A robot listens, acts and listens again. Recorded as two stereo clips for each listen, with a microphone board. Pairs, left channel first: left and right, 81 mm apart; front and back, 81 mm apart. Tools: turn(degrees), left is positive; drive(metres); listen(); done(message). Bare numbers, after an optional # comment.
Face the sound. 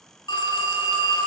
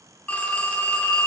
# The phone ringing: 70° left.
turn(70)
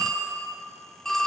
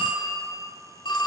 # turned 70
done("Found it: a phone ringing, straight ahead, 2 to 4 m away.")